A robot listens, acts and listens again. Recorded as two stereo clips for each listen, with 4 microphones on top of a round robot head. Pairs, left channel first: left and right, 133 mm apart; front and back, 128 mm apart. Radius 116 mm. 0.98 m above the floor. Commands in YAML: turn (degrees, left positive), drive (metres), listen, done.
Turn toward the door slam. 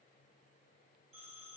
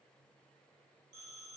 listen: true
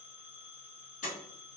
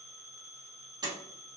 turn: 125
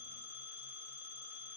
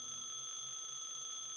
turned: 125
done: "I heard a door slam from this way, but can't make it out now."